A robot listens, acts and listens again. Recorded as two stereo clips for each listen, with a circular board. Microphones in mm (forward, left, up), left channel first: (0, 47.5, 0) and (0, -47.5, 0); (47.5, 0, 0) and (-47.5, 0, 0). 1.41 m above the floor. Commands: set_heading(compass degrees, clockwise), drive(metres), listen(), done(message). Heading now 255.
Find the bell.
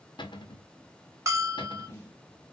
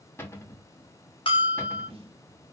set_heading(285)
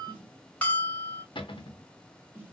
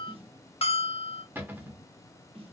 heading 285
set_heading(270)
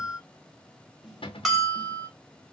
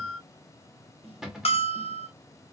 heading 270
done("Facing the bell.")